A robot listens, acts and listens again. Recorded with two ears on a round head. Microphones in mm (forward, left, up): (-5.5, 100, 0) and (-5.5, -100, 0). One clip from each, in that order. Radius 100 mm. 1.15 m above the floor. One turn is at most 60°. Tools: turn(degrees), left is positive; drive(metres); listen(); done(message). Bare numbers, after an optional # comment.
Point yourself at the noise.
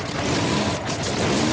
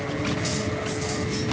listen()
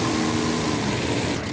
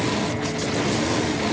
listen()
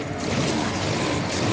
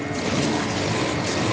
done("I can't make out anything.")